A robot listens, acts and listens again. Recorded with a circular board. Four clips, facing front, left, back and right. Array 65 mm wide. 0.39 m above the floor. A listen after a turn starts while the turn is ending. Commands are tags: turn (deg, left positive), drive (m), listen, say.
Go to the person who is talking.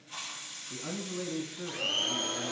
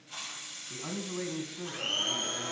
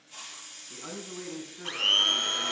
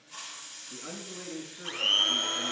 <turn deg="110"/>
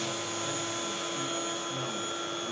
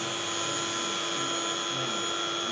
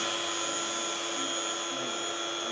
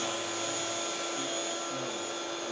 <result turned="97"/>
<turn deg="15"/>
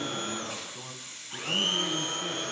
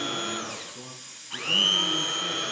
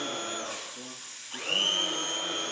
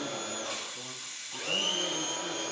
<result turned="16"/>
<listen/>
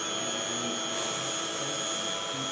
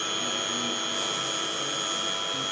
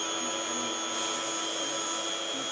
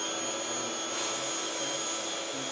<say>I heard a man speaking from this way, but can't make it out now. I did not reach it.</say>